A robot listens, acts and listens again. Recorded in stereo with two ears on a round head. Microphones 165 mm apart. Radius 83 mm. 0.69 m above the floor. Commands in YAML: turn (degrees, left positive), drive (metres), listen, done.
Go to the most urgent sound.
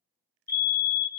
turn: 55
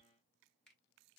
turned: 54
listen: true
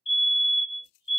turn: 35
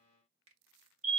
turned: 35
drive: 1.0
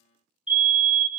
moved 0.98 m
drive: 1.0
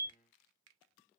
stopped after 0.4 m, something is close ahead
turn: -10
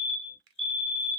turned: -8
done: "I am next to the fire alarm."